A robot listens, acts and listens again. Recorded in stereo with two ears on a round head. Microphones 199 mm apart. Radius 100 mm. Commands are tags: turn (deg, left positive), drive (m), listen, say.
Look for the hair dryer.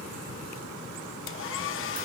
<turn deg="60"/>
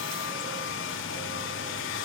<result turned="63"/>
<turn deg="60"/>
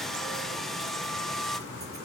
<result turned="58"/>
<say>Facing the hair dryer, under 1 m away.</say>